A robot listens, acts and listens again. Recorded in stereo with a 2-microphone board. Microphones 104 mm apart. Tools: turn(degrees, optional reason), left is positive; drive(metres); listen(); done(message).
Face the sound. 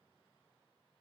listen()
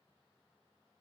listen()
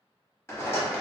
turn(degrees=25, reason="The rattle: about 25° left or 155° left.")
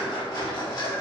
turn(degrees=125, reason="So it is at 125° left.")
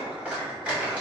turn(degrees=-15, reason="The rattle is now 15° right.")
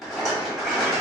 done("Found it: a rattle, straight ahead.")